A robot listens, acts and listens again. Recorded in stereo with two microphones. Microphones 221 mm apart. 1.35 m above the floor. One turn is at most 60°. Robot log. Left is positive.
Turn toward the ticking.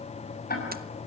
note: The ticking: about 45° left or 135° left.
cmd yaw +45
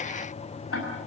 note: So it is at 90° left.
cmd yaw +60
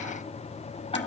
note: The ticking is now 25° left.
cmd yaw +25
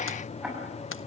end: Found it: ticking, straight ahead, over 4 m away.